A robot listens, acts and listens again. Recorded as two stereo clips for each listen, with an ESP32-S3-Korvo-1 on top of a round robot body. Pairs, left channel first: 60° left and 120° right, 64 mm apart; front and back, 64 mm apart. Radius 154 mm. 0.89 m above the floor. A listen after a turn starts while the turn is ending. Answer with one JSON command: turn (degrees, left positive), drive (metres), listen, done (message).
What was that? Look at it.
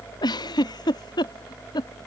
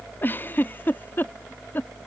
{"turn": 65}
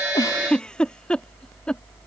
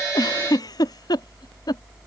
{"turn": -15}
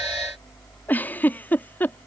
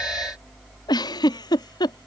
{"done": "Facing the giggle."}